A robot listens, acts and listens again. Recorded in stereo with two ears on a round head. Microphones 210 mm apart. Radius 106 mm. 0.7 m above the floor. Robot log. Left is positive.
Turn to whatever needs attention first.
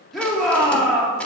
cmd yaw +30
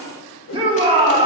note: So it is at 25° right.
cmd yaw -25
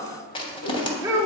note: The shout is now 15° right.
cmd yaw -15
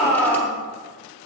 end: Facing the shout.